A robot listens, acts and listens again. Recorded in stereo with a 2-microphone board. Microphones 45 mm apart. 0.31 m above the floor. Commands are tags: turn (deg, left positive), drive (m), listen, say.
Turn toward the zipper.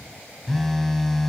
<listen/>
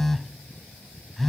<listen/>
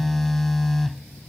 <say>I can't make out a zipper, only a phone buzzing.</say>